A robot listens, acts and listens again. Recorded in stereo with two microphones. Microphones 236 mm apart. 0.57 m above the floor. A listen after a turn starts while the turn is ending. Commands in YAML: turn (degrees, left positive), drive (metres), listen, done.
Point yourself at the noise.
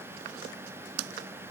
listen: true
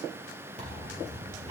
turn: -30
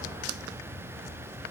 listen: true
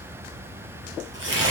turn: -125
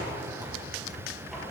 done: "Facing the tearing paper, 2 to 4 m away."